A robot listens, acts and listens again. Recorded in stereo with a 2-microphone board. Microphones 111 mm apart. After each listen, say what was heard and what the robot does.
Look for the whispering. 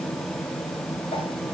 Keep listening.
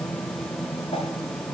Keep listening.
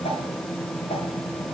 I can't make out whispering to turn to.